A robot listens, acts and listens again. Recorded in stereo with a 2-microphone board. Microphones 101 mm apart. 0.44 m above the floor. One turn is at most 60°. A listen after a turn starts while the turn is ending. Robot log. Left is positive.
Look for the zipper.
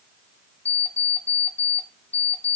cmd idle
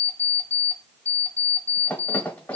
cmd idle
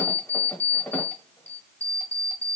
end: I can't make out a zipper to turn to.